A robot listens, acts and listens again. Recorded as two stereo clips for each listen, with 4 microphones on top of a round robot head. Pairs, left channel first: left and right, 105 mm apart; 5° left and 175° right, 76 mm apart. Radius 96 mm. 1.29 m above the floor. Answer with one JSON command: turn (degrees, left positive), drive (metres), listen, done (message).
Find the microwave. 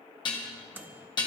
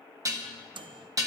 {"turn": -165}
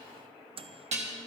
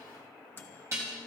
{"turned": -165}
{"turn": -60}
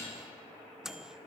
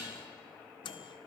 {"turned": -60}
{"done": "Facing the microwave."}